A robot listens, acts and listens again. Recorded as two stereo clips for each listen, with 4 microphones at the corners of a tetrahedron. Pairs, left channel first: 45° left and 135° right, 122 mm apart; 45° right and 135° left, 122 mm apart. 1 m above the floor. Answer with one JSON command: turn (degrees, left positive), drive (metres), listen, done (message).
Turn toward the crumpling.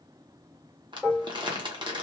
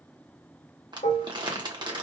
{"turn": 180}
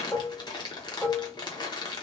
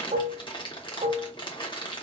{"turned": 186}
{"done": "Found it: crumpling, straight ahead."}